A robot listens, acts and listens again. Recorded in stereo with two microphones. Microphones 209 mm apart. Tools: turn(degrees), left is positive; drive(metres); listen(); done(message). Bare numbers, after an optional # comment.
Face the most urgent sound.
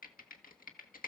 listen()
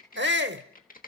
# The shout: about 60° right or 120° right.
turn(-60)
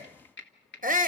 # So it is at 45° right.
turn(-45)
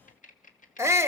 # The shout is now 15° right.
turn(-15)
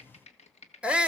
done("Facing the shout, 1 to 2 m away.")